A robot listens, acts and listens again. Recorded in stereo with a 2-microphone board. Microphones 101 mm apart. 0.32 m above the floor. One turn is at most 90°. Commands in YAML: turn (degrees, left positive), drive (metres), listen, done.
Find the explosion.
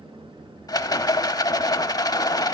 listen: true
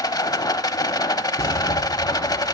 turn: 35
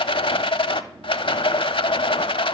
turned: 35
listen: true
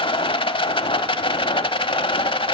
done: "I heard an explosion, but can't make it out now. It was about straight ahead or 110° left."